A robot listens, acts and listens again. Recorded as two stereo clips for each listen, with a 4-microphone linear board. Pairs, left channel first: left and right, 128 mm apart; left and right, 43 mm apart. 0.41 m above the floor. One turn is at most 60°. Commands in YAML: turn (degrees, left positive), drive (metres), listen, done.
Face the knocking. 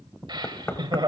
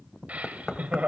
turn: 20
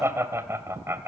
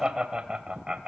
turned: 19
listen: true
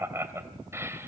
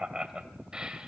listen: true
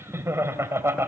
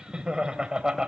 done: "I heard knocking, but can't make it out now. It was about straight ahead or 140° left."